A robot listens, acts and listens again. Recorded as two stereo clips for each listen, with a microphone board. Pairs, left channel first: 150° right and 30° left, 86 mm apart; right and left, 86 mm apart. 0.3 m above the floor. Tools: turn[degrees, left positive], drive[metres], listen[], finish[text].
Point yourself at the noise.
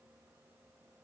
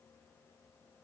Action: listen[]
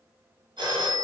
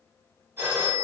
Thought: The phone ringing: 30° left.
Action: turn[30]
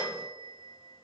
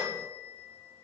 Thought: The phone ringing is now 30° left.
Action: turn[30]
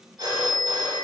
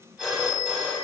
Action: finish[Found it: a phone ringing, straight ahead.]